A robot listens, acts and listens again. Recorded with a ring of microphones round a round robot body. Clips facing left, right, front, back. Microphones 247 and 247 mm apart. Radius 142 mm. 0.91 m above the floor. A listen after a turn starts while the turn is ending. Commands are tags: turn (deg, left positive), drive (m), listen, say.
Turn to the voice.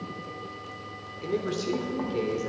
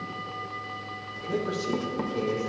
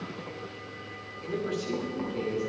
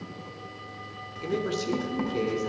<turn deg="150"/>
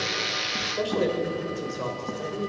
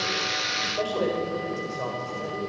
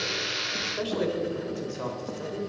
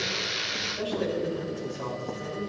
<turn deg="30"/>
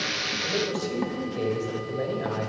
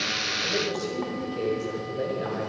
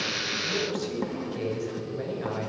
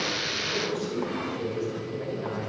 <say>Facing the man speaking, over 4 m away.</say>